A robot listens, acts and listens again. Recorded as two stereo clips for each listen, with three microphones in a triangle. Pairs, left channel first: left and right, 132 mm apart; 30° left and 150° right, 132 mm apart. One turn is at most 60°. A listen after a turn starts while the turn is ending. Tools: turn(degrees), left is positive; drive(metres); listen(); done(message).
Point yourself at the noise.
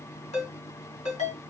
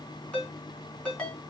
turn(degrees=60)
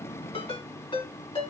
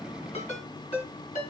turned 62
turn(degrees=45)
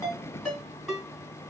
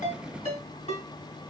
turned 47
done("Facing the ringtone, 2 to 4 m away.")